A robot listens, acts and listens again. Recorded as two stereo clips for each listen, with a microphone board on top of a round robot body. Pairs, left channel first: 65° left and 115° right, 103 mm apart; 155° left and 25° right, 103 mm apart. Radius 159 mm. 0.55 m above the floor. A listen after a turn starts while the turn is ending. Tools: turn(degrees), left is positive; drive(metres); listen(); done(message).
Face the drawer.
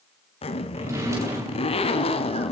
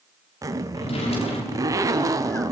turn(degrees=-175)
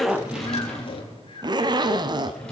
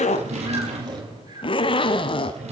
turn(degrees=-15)
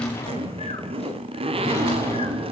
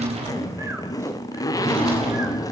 done("Facing the drawer, over 4 m away.")